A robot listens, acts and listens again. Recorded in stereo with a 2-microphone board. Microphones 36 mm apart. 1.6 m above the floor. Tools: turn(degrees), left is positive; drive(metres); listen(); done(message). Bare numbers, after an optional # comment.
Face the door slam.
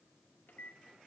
listen()
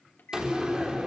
# The door slam: about 20° right or 160° right.
turn(-20)
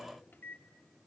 listen()
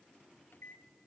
done("I heard a door slam, but can't make it out now. It was about straight ahead or 140° right.")